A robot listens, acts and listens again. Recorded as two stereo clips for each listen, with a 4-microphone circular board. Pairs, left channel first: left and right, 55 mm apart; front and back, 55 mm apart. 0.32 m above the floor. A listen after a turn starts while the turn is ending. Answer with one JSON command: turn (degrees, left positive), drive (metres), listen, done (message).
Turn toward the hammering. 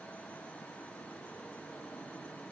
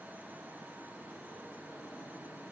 {"listen": true}
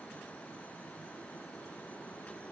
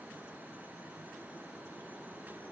{"listen": true}
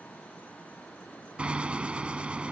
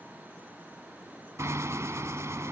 {"turn": -155}
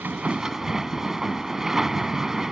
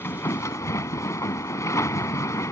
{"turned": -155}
{"turn": -10}
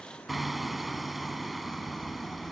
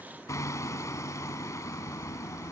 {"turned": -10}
{"done": "Facing the hammering."}